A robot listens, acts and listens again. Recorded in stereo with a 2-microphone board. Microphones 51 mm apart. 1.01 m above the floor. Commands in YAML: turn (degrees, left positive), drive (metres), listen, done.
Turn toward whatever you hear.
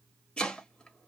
turn: 20
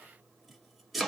done: "Found it: chopping, straight ahead, 1 to 2 m away."